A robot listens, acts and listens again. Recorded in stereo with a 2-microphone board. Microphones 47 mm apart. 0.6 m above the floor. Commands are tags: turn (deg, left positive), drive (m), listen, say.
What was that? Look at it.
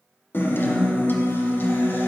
<turn deg="50"/>
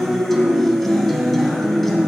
<say>Facing the guitar.</say>